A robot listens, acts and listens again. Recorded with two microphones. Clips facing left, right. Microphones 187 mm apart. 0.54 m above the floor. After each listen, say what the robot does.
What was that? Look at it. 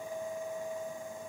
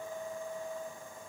Keep listening.
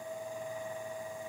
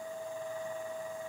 Keep listening.
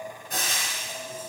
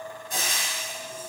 Turn 60° left.
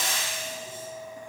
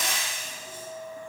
Turn 35° left.
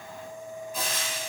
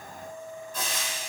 Turn 15° left.
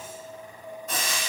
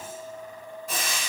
Found it: frying, straight ahead, 2 to 4 m away.